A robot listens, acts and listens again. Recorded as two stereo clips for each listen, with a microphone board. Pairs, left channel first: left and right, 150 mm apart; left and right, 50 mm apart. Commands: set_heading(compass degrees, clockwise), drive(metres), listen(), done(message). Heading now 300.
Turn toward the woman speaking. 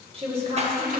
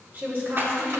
set_heading(345)
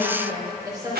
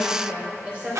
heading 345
set_heading(10)
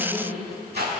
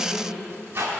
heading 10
set_heading(30)
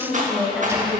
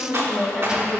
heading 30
done("Facing the woman speaking.")